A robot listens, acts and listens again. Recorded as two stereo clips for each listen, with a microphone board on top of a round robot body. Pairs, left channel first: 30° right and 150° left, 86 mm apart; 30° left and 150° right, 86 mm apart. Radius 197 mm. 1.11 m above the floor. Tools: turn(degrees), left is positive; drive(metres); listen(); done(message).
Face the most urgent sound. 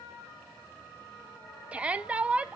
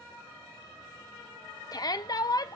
turn(degrees=75)
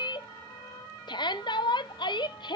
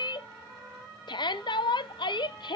done("Facing the shout, under 1 m away.")